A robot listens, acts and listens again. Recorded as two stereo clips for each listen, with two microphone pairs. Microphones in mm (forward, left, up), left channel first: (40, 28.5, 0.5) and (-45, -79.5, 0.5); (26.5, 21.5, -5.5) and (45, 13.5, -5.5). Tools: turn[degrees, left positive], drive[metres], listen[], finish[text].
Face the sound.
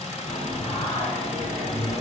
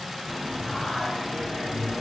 Thought: The singing: 110° left.
Action: turn[110]
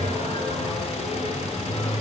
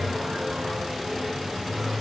Action: finish[Facing the singing, over 4 m away.]